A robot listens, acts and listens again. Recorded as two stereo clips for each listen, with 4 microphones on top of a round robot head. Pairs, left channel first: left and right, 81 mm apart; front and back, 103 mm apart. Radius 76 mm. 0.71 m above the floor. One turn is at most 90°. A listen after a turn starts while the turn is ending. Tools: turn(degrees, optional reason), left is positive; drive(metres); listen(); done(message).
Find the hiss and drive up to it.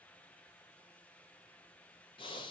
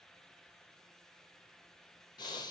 listen()
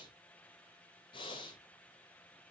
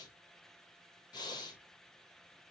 listen()
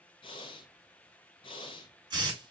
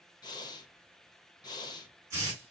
turn(degrees=-90, reason="The hiss: 120° right.")
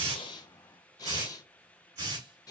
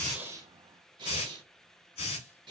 turn(degrees=-35, reason="The hiss is now 35° right.")
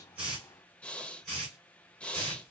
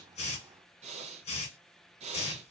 drive(metres=1.0)
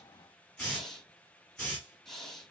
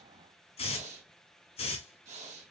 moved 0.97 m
drive(metres=1.0)
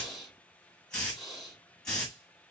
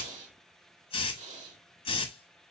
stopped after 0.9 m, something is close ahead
turn(degrees=10, reason="The hiss is now 10° left.")
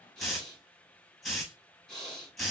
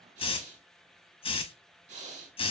done("Arrived at the hiss, straight ahead.")